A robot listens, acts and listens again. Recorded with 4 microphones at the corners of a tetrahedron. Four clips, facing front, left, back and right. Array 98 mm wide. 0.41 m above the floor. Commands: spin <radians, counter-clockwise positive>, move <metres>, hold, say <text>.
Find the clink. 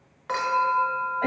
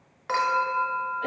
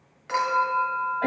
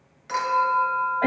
spin 0.96
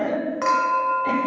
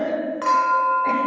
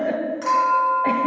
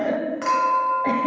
spin 0.26
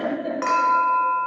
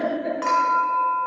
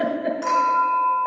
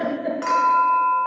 say Facing the clink.